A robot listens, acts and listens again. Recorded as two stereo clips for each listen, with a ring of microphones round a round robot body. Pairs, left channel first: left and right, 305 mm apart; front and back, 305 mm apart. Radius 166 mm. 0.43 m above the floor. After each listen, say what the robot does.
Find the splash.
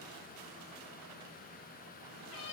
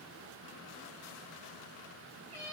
Keep listening.
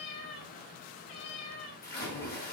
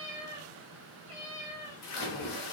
Turn 30° left.
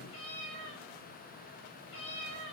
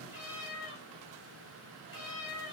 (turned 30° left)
I heard a splash from this way, but can't make it out now.